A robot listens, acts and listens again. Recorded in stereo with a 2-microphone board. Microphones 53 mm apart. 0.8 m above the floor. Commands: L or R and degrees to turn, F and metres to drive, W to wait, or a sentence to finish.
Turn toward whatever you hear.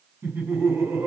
R45
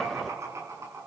R85
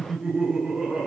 R10
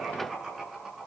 Facing the laughter.